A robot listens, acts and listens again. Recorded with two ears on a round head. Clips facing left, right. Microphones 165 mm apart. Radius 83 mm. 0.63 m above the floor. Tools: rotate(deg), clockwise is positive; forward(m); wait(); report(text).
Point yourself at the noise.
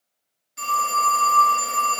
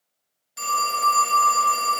rotate(65)
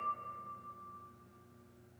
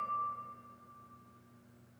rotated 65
wait()
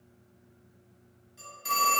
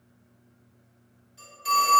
report("Facing the phone ringing, 1 to 2 m away.")